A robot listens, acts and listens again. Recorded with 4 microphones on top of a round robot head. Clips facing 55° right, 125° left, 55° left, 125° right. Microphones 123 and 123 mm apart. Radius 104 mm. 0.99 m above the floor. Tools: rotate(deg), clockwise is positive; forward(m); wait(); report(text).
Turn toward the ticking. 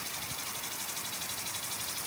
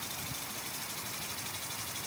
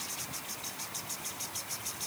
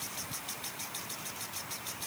wait()
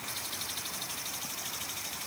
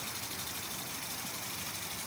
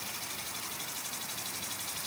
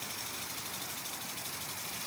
wait()
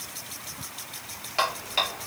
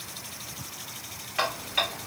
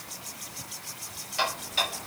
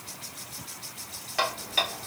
rotate(110)
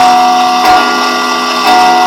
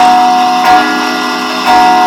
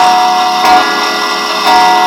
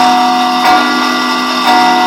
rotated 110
report("Facing the ticking, 1 to 2 m away.")